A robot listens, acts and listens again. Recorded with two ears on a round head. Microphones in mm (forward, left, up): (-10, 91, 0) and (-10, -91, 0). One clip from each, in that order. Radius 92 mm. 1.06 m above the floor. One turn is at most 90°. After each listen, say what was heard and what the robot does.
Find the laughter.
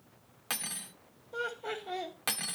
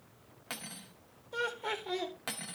The laughter: about 70° right or 110° right. Turn 70° right.
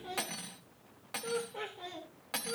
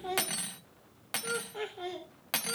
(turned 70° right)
So it is at 50° right. Turn 50° right.
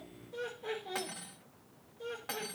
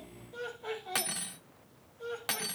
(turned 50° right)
Facing the laughter.